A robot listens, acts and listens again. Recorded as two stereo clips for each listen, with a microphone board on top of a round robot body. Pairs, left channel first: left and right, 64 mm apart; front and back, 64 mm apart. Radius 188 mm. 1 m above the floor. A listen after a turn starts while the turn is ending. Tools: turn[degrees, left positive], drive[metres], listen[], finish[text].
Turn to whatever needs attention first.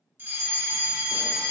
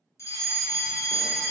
Thought: The fire alarm: 35° right.
Action: turn[-35]
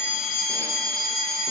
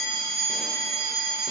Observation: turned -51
Thought: The fire alarm is now 15° left.
Action: turn[15]
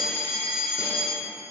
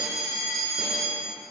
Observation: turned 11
Action: finish[Found it: a fire alarm, straight ahead.]